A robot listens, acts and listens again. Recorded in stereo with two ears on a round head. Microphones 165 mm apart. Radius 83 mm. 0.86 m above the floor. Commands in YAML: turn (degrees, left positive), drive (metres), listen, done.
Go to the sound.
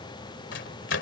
turn: 65
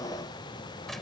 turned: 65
listen: true
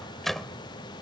drive: 1.0
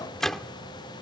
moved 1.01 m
drive: 1.0
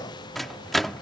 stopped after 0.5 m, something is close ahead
done: "Arrived at the microwave, straight ahead."